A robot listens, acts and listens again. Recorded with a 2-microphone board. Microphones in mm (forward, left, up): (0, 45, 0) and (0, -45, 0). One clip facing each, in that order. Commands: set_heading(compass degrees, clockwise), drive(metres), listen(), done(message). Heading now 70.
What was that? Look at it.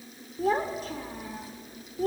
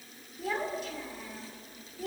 set_heading(30)
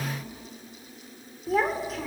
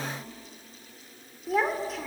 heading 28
done("Facing the child speaking.")